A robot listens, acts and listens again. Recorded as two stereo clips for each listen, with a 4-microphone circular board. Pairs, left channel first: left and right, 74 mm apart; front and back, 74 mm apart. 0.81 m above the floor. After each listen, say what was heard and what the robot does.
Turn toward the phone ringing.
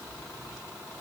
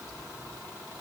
Keep listening.
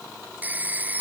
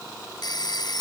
The phone ringing: 20° right. Turn 20° right.
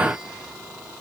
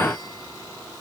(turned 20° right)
Keep listening.
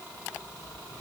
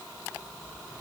Keep listening.
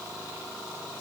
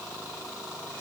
I heard a phone ringing from this way, but can't make it out now.